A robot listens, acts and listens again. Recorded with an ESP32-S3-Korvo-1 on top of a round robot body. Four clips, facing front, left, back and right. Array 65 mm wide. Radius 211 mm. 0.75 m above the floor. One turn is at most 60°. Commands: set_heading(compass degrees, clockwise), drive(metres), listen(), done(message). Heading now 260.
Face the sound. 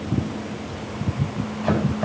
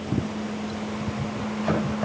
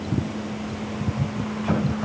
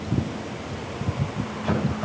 set_heading(230)
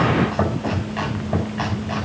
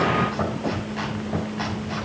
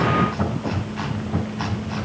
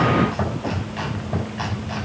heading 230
done("Found it: chopping, straight ahead, over 4 m away.")